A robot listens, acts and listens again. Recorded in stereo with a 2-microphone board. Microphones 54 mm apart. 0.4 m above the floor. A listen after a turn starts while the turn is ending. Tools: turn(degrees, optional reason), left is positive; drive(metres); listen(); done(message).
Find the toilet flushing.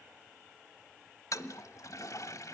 turn(degrees=90)
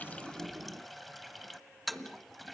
done("Facing the toilet flushing.")